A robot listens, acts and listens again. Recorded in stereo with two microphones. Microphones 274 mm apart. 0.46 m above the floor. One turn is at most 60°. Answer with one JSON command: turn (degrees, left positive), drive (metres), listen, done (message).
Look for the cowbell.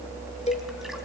{"turn": 25}
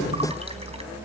{"listen": true}
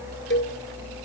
{"turn": 60}
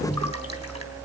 {"turn": 60}
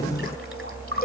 {"turn": 30}
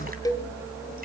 {"turn": 15}
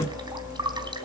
{"listen": true}
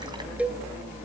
{"done": "Found it: a cowbell, straight ahead."}